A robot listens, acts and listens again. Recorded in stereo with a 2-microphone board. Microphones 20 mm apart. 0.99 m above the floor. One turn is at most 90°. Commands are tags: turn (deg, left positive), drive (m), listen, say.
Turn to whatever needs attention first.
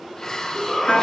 <turn deg="30"/>
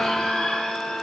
<turn deg="90"/>
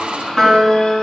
<turn deg="50"/>
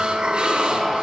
<listen/>
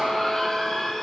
<turn deg="25"/>
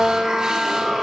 <listen/>
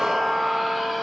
<listen/>
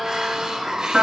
<say>I heard a shout from this way, but can't make it out now.</say>